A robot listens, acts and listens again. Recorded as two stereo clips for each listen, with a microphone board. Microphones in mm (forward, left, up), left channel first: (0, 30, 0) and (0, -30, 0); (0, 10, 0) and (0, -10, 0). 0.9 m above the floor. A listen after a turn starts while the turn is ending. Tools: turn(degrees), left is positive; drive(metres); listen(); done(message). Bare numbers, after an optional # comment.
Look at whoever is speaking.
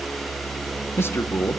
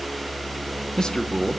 # The man speaking: about 45° left or 135° left.
turn(45)
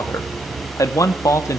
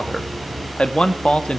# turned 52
# So it is at 80° left.
turn(80)
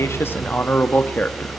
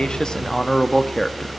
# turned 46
# The man speaking is now 30° left.
turn(30)
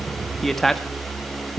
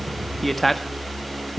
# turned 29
done("Facing the man speaking, 1 to 2 m away.")